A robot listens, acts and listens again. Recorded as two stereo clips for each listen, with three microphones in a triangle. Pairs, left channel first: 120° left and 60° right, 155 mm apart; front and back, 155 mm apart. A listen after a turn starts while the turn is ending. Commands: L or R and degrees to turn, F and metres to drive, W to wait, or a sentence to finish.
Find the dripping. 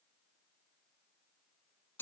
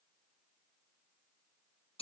W
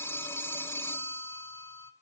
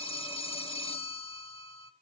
W
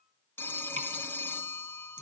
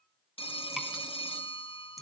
R90
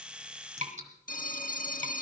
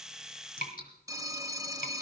R20
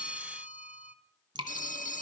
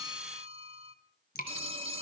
Found it: dripping, straight ahead.